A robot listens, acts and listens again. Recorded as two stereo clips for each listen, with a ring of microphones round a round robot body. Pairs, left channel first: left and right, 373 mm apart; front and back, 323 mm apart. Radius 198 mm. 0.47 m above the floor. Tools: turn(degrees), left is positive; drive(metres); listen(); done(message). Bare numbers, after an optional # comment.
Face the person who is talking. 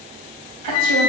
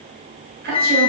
# The woman speaking: 115° right.
turn(-115)
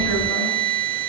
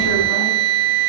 listen()
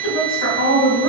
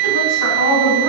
# The woman speaking is now 35° left.
turn(35)
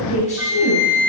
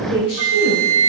# The woman speaking is now 20° left.
turn(20)
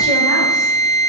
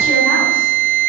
listen()
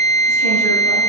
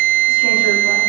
listen()
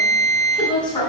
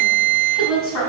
# The woman speaking is now 10° left.
turn(10)
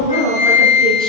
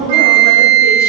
done("Found it: a woman speaking, straight ahead, over 4 m away.")